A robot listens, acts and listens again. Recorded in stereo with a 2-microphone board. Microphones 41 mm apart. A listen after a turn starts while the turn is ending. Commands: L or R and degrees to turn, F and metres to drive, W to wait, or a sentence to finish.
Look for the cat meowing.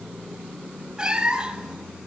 R15
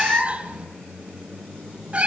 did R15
R155
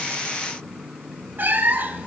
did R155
R60
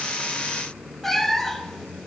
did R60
Facing the cat meowing.